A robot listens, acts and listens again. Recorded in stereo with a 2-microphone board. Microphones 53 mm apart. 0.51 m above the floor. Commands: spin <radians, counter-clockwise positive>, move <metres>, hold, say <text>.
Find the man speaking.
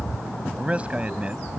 spin -0.44
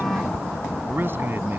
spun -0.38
spin -2.36
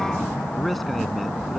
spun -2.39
hold
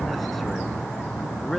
say Found it: a man speaking, straight ahead.